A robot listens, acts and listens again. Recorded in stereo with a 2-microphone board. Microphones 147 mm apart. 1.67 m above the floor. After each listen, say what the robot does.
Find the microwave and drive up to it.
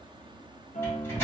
Turn 15° left.
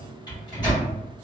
Turn 150° left.
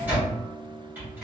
Turn 15° right.
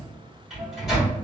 Drive 1.0 m forward.
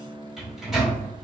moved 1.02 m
Drive 1.0 m forward.
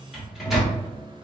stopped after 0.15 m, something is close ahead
Arrived at the microwave, straight ahead.